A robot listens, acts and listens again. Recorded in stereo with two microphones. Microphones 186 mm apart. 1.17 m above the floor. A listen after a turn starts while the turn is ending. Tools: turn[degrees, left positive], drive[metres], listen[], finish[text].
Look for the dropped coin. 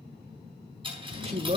Thought: The dropped coin: about 25° right or 155° right.
Action: turn[-25]
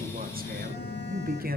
Action: listen[]
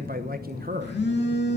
Action: finish[I heard a dropped coin, but can't make it out now. It was about straight ahead or 130° right.]